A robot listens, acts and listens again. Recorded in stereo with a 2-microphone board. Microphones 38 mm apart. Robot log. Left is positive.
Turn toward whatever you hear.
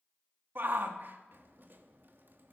note: The shout: about 60° right or 120° right.
cmd yaw -60
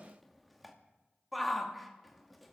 end: Found it: a shout, straight ahead, 1 to 2 m away.